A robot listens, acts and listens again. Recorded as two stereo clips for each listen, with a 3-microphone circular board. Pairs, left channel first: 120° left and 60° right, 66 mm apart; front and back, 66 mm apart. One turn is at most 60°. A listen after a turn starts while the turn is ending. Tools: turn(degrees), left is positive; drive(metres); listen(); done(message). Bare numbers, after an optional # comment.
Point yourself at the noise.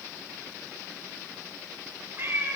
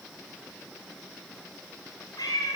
done("Found it: a cat meowing, straight ahead.")